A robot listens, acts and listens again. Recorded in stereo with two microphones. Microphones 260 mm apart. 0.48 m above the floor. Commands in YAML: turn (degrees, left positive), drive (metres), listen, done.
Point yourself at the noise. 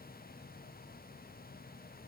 listen: true
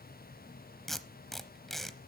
turn: 30
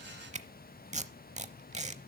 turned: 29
turn: -25
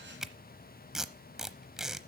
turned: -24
done: "Facing the tape being pulled, under 1 m away."